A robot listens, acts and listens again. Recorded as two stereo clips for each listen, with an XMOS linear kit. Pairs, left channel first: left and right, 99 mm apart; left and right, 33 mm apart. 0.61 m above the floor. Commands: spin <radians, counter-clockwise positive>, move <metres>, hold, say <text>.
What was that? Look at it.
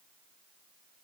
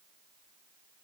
hold
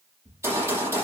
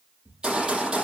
spin -0.52
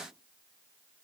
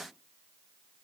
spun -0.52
hold
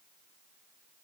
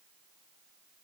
say I heard a gunshot, but can't make it out now. It was about straight ahead or 120° right.